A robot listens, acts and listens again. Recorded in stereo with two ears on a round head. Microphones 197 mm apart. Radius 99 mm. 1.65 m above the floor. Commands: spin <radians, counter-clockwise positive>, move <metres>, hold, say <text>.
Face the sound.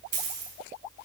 spin -0.70
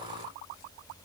hold
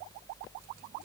say I heard a dropped coin, but can't make it out now. It was about straight ahead or 100° right.